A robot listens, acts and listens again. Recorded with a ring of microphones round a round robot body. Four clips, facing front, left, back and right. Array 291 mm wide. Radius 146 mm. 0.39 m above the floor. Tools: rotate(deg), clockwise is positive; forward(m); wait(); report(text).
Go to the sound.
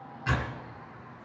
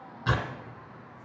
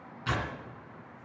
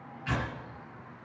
rotate(-85)
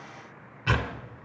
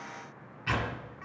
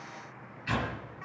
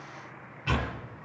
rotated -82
forward(1.0)
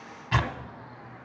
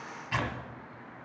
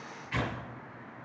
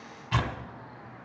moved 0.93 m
forward(1.0)
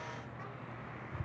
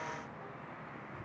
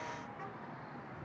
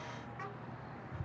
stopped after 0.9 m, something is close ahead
wait()
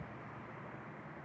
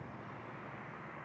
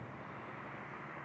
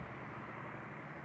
wait()
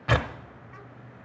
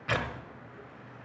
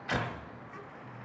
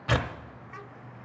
rotate(15)
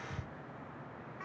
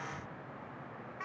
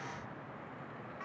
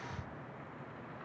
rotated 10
wait()
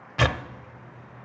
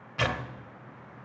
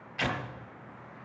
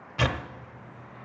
report("Arrived at the tearing paper, straight ahead.")